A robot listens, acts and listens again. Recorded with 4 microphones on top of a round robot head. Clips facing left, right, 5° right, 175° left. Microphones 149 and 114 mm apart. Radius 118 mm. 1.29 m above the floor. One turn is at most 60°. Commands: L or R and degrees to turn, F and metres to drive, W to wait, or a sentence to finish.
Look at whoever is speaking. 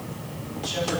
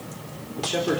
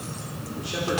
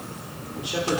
R60
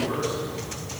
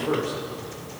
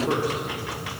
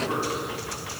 R55
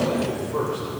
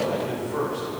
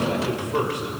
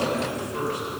L20
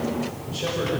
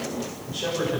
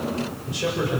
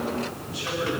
Found it: a man speaking, straight ahead.